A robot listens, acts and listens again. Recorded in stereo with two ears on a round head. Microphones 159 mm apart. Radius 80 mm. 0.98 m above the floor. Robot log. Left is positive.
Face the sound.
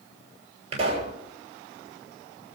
note: The pop: about 35° right or 145° right.
cmd yaw -35
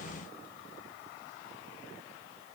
cmd idle
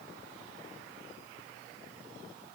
end: I heard a pop, but can't make it out now. It was about straight ahead or 110° right.